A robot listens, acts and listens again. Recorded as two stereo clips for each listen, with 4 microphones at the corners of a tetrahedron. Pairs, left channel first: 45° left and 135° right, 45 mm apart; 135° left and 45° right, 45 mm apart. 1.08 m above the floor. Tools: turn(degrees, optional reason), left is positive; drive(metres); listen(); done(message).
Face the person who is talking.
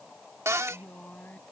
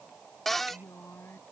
turn(degrees=100, reason="The woman speaking: 100° left.")
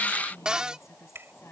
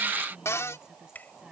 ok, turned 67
turn(degrees=30, reason="The woman speaking is now 30° left.")
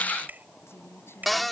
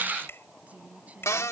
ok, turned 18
turn(degrees=15, reason="The woman speaking is now 15° left.")
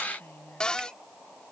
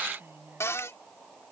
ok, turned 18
done("Found it: a woman speaking, straight ahead.")